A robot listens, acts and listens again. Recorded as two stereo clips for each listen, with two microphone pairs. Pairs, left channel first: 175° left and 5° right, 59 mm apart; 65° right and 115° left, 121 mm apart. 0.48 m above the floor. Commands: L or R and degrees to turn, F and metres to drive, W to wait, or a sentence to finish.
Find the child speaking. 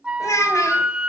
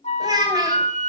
L165
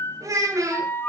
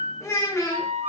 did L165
Found it: a child speaking, straight ahead.